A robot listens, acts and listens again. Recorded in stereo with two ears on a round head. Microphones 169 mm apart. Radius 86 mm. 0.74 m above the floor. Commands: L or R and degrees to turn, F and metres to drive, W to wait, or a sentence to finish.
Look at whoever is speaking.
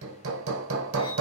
W
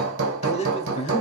L35
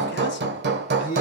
L100
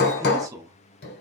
R20
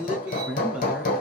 Found it: a man speaking, straight ahead.